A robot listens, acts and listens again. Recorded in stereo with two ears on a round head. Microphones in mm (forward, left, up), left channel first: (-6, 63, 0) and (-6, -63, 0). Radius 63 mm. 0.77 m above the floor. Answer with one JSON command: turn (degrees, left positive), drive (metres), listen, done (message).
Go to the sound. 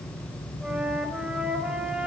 {"turn": -30}
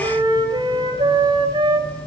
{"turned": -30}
{"turn": -145}
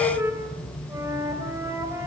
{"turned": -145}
{"turn": -20}
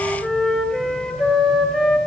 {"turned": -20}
{"drive": 1.0}
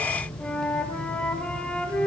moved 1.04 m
{"turn": 10}
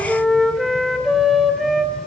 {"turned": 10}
{"drive": 1.0}
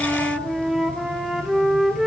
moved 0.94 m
{"drive": 1.0}
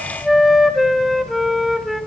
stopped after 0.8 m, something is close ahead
{"done": "I am next to the flute."}